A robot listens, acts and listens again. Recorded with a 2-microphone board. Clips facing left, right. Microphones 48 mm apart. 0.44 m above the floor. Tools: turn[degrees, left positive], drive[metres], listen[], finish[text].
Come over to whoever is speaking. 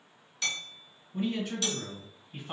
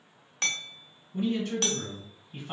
Action: turn[30]
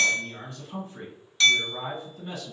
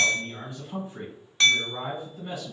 Thought: So it is at 25° right.
Action: turn[-25]
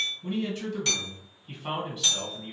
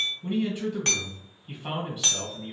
Thought: The man speaking is now 10° right.
Action: turn[-10]
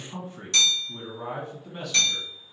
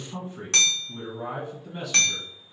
Action: drive[1.0]
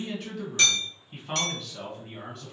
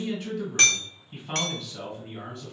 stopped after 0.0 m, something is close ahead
Action: finish[Something is in my way. I am facing the man speaking but have not reached it.]